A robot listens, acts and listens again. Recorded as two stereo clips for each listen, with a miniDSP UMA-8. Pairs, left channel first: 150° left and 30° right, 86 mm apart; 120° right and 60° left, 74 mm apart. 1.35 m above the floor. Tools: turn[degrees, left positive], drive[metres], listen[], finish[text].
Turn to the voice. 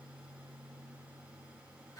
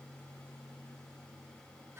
Action: listen[]
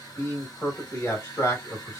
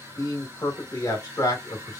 Thought: The man speaking: 150° right.
Action: turn[-150]
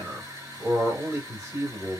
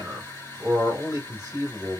Thought: The man speaking is now 25° left.
Action: turn[25]
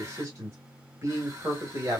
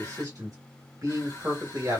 Thought: The man speaking is now 25° left.
Action: turn[25]
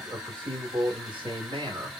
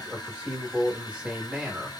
Thought: The man speaking is now 15° right.
Action: turn[-15]
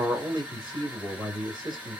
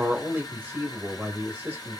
Action: finish[Found it: a man speaking, straight ahead.]